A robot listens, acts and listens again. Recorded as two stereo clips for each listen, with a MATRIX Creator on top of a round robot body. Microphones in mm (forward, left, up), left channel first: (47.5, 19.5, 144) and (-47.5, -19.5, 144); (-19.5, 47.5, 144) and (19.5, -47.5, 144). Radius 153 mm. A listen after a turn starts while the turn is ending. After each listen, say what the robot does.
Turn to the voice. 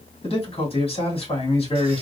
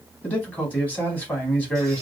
Turn 40° left.
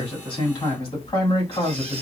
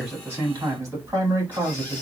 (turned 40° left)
Turn 10° right.
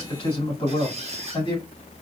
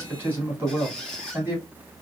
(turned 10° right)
Found it: a man speaking, straight ahead.